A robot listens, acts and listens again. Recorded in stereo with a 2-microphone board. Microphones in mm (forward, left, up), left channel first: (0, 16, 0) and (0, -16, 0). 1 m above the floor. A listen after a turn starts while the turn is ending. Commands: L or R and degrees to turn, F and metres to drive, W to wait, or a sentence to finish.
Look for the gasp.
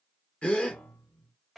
L35
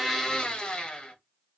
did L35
W
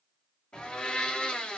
I heard a gasp, but can't make it out now. It was about straight ahead or 110° left.